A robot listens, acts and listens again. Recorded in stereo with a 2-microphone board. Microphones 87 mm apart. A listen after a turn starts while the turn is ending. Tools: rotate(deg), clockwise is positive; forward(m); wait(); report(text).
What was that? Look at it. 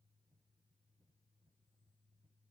wait()
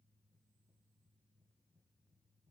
wait()
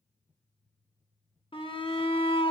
rotate(-90)
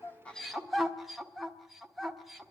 report("Found it: a shout, straight ahead.")